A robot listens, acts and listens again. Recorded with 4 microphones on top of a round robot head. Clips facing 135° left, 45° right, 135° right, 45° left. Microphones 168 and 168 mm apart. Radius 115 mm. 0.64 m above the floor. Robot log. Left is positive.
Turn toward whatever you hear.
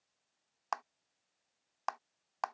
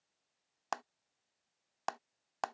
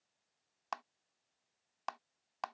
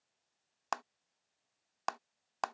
note: The clap: 10° left.
cmd yaw +10
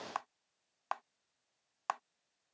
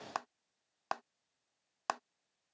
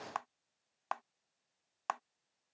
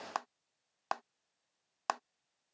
end: Facing the clap.